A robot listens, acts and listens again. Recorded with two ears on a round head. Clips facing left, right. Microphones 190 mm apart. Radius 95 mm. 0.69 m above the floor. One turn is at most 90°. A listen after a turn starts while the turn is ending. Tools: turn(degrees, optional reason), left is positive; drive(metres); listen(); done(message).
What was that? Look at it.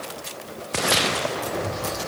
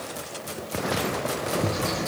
turn(degrees=-70, reason="The bird: about 70° right or 110° right.")
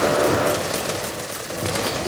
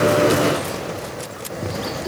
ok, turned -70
done("Facing the bird.")